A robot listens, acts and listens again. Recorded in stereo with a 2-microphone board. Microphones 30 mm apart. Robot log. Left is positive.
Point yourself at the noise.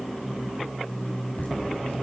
note: The laughter: about 75° left or 105° left.
cmd yaw +75
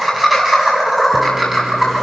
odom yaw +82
end: Facing the laughter, over 4 m away.